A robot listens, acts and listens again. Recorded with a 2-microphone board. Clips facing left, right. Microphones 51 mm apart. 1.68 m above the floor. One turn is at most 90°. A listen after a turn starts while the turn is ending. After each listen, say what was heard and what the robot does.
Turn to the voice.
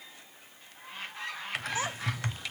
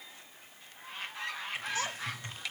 The child speaking: about 20° left or 160° left. Turn 20° left.
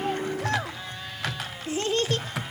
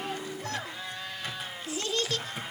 So it is at 140° left. Turn 90° left.
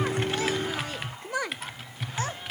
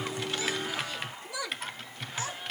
The child speaking is now 50° left. Turn 50° left.
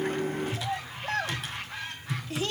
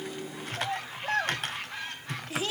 Found it: a child speaking, straight ahead.